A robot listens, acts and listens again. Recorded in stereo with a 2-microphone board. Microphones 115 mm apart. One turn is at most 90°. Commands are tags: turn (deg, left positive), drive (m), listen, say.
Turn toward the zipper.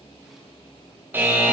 <listen/>
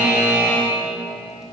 <listen/>
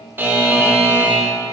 <say>I can't make out a zipper to turn to.</say>